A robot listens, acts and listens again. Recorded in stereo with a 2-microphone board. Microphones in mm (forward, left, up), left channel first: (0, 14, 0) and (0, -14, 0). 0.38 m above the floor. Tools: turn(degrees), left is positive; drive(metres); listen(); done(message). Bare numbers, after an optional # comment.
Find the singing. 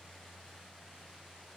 listen()
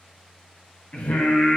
# The singing: about 65° left or 115° left.
turn(65)
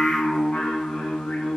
# So it is at 50° left.
turn(50)
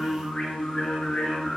# The singing is now 25° left.
turn(25)
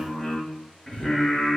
# The singing is now 15° left.
turn(15)
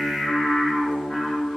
done("Facing the singing, 2 to 4 m away.")